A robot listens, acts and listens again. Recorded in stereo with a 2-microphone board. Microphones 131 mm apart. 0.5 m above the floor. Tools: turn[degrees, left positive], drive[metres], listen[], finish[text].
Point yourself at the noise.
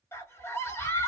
Thought: The scream: about 20° left or 160° left.
Action: turn[20]
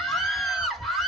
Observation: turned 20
Action: finish[Facing the scream.]